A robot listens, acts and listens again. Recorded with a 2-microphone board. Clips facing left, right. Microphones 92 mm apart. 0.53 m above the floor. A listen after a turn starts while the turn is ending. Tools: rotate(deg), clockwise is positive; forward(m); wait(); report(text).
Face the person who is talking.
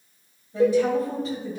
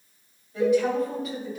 rotate(-35)
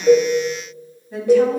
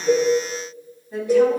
report("Found it: a woman speaking, straight ahead.")